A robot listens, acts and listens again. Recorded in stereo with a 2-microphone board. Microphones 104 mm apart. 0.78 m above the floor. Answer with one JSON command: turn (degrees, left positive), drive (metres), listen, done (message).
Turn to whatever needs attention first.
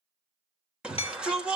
{"turn": -30}
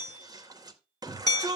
{"turn": -140}
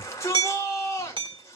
{"turn": 30}
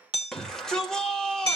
{"done": "Facing the shout."}